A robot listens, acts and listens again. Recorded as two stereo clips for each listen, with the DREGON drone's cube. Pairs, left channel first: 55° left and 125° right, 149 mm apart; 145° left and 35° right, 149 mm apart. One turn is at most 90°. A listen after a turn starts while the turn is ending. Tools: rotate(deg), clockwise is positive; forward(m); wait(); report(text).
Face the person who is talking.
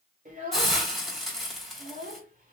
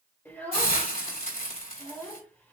rotate(90)
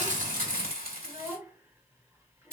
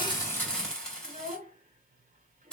rotate(55)
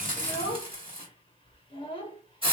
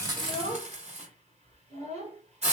report("Facing the child speaking, 1 to 2 m away.")